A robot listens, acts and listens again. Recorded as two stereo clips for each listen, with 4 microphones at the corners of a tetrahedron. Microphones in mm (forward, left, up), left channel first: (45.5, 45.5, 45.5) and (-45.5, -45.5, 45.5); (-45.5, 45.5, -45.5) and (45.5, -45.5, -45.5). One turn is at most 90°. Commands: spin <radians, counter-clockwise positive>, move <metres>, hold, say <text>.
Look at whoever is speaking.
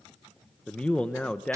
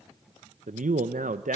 spin -0.61
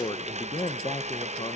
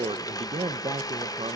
say Facing the man speaking.